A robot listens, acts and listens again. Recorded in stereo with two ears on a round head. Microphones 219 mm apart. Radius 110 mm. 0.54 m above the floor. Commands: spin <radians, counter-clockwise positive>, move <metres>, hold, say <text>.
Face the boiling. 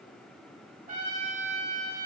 hold
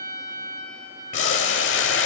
spin 0.96
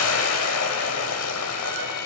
spin 1.22
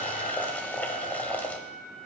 spin 0.17
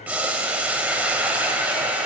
say Facing the boiling, under 1 m away.